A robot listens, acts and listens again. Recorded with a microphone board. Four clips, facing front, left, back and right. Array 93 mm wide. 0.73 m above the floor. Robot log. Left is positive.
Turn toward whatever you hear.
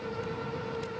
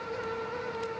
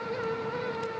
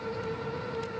cmd idle
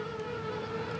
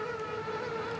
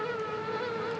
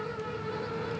cmd idle
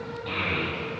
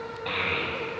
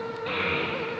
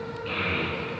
note: The child speaking: 95° left.
cmd yaw +95
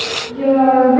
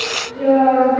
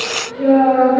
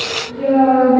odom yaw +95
note: The child speaking is now 10° left.
cmd yaw +10
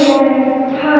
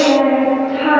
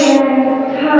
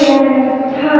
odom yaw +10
end: Found it: a child speaking, straight ahead, 2 to 4 m away.